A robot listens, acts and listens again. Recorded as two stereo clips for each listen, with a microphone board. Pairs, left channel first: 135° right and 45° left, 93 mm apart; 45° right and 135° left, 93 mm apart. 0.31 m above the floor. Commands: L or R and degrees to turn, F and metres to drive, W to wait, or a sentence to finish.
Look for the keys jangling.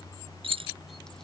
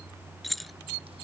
L45
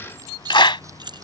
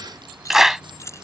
L10
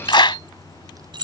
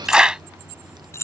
L15
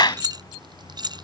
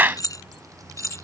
L10
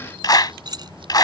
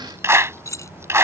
L10
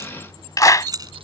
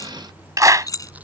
Facing the keys jangling.